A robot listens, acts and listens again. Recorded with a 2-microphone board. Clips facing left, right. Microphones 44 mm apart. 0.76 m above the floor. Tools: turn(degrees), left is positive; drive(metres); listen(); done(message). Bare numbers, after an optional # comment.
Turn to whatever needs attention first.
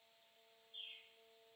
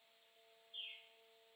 listen()
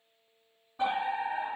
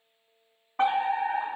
# The fire alarm: about 60° right or 120° right.
turn(-60)
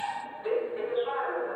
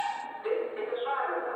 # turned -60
# So it is at 20° right.
turn(-20)
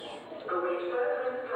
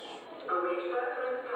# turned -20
done("Found it: a fire alarm, straight ahead, 2 to 4 m away.")